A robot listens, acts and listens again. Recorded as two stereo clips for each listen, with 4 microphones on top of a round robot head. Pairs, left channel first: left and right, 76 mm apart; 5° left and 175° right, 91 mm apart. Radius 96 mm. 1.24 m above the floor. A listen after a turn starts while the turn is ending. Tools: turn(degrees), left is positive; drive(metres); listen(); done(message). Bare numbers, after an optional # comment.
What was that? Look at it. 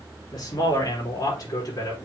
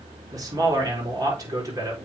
# The man speaking: 135° left.
turn(135)
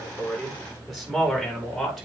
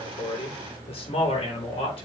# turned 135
done("Found it: a man speaking, straight ahead, over 4 m away.")